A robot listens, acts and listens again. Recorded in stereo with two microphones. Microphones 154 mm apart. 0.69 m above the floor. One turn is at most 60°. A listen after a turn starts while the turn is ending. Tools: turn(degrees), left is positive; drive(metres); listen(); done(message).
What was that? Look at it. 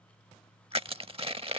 turn(degrees=-40)
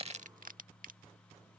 turn(degrees=-60)
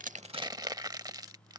turn(degrees=-30)
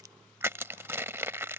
turn(degrees=-20)
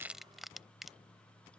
done("Found it: crushing, straight ahead.")